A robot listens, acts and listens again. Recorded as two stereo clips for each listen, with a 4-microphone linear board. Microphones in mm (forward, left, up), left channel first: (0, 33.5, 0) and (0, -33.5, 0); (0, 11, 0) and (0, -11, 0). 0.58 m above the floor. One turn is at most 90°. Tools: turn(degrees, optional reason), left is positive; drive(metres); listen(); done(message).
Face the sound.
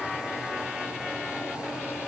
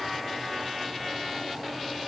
listen()
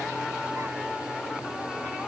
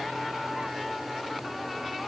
listen()
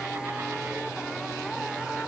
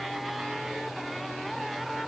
done("I can't make out anything to turn to.")